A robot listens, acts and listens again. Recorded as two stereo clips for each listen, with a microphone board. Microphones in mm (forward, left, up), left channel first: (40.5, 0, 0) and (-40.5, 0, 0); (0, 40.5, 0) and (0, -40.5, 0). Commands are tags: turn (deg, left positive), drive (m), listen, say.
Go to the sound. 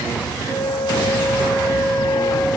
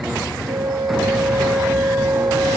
<turn deg="-70"/>
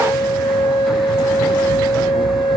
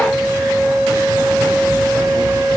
<drive m="1.0"/>
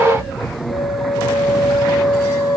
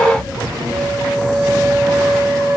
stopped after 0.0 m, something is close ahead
<turn deg="-10"/>
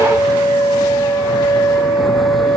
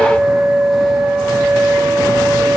<say>Something is in my way. I am facing the flute but have not reached it.</say>